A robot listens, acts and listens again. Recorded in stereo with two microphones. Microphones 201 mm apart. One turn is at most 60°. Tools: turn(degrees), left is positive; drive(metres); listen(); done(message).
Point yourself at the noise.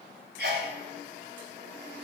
turn(degrees=-60)
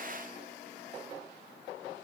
listen()
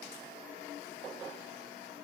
done("I heard a sneeze, but can't make it out now. It was about straight ahead or 60° right.")